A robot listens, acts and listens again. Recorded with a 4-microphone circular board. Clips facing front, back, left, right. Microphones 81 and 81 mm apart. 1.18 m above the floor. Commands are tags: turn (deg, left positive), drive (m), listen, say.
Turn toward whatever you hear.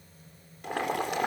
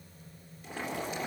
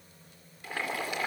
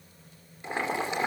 <turn deg="-20"/>
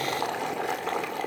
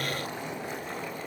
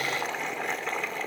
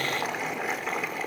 <say>Found it: boiling, straight ahead, 2 to 4 m away.</say>